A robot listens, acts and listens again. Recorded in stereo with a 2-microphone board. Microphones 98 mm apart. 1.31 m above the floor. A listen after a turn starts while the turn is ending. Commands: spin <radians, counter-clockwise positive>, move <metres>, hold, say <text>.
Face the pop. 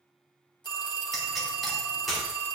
spin 0.52
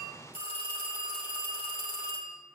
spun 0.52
hold
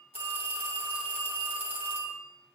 say I heard a pop, but can't make it out now. It was about 30° right or 150° left.